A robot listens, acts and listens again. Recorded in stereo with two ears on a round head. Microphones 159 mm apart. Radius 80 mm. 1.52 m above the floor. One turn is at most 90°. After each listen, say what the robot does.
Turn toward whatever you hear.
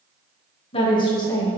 Turn 20° left.
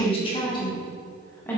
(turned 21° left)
Turn 30° left.
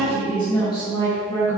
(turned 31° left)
Turn 20° left.
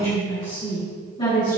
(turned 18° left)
Turn 25° left.
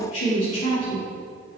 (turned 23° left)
Turn 90° left.
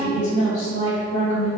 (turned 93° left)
Turn 40° left.
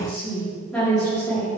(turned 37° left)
Facing the woman speaking.